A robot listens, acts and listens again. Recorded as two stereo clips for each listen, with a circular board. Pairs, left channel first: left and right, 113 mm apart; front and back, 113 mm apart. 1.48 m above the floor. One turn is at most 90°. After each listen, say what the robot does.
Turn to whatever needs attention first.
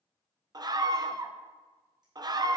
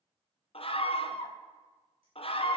Turn 35° right.
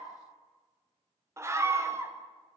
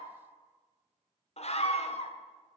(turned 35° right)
Turn 25° right.
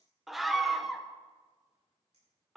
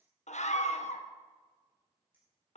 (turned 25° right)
Facing the scream, 1 to 2 m away.